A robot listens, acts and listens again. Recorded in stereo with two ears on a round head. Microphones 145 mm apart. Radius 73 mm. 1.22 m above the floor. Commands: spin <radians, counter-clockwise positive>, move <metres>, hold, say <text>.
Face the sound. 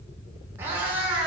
spin -0.52
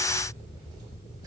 hold
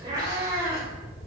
spin -0.35
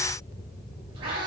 spin -2.62
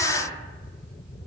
hold
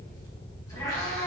spin 0.35
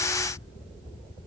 hold
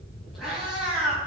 say Facing the cat meowing.